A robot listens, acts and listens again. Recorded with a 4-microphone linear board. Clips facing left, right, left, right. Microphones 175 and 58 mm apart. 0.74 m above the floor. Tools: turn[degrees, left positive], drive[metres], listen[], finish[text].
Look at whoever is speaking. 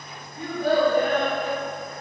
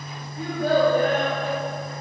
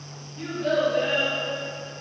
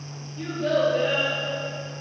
Action: turn[30]
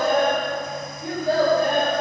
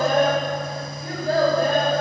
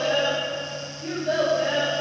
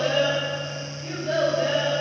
Thought: So it is at 115° left.
Action: turn[115]
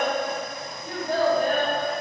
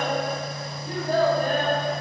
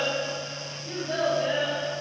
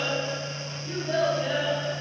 Thought: The child speaking is now 20° right.
Action: turn[-20]
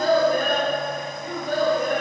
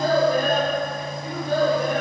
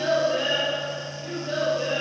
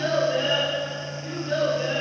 Action: finish[Found it: a child speaking, straight ahead, 2 to 4 m away.]